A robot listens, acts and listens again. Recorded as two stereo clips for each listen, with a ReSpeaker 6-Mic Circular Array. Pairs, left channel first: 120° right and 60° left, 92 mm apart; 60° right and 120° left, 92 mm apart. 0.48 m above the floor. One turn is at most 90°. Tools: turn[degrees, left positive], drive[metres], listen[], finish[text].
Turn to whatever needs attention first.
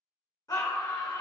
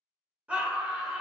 Thought: The scream: 165° right.
Action: turn[-90]
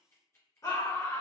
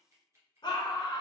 Thought: The scream is now 75° right.
Action: turn[-75]
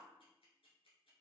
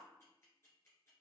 Action: listen[]
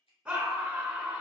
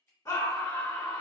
Thought: The scream is now 15° right.
Action: turn[-15]
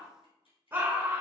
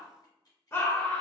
Action: finish[Found it: a scream, straight ahead, 1 to 2 m away.]